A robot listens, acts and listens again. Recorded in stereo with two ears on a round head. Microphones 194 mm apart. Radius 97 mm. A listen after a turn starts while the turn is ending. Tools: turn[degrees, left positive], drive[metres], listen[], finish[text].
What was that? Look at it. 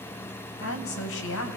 Thought: The woman speaking: about 70° left or 110° left.
Action: turn[70]
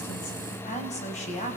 Thought: So it is at 35° left.
Action: turn[35]
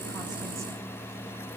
Action: listen[]
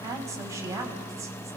Thought: The woman speaking is now 15° right.
Action: turn[-15]
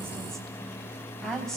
Action: finish[Facing the woman speaking, 2 to 4 m away.]